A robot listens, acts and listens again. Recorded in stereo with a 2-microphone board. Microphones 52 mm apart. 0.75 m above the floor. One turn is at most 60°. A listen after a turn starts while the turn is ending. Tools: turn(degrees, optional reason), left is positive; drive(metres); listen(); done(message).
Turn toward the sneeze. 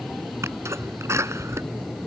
turn(degrees=-60, reason="The sneeze: about 70° right or 110° right.")
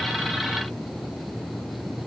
listen()
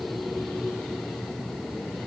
done("I heard a sneeze, but can't make it out now. It was about 10° right or 50° right.")